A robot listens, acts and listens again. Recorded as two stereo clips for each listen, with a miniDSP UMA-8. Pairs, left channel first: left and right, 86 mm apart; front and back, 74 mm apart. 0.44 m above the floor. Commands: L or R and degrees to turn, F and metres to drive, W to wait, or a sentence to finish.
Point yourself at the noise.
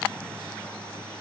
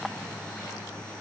W
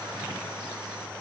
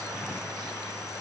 W
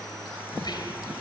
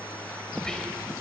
L80
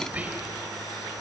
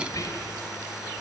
R20
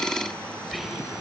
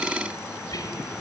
Found it: whispering, straight ahead.